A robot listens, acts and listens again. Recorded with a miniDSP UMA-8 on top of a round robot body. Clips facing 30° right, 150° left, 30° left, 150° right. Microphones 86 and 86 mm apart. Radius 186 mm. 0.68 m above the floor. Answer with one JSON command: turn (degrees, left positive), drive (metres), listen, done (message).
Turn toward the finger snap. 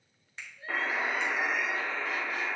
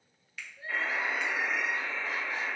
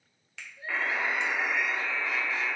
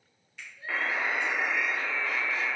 {"turn": 35}
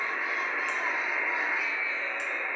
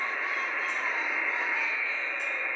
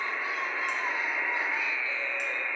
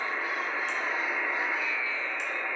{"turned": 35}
{"listen": true}
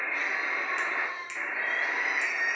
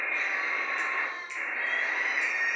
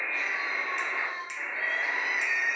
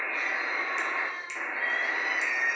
{"listen": true}
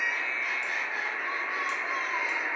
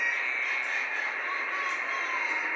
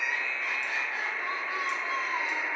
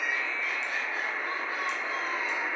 {"done": "I heard a finger snap from this way, but can't make it out now."}